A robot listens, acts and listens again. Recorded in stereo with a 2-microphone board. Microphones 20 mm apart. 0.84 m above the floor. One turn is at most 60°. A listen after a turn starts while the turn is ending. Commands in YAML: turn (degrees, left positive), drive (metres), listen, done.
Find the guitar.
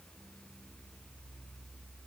listen: true
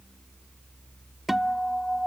turn: -30
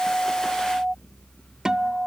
turn: -60
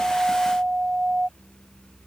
turn: -60
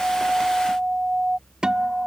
turn: -50
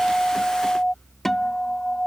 turn: 15
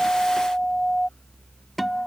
done: "Facing the guitar."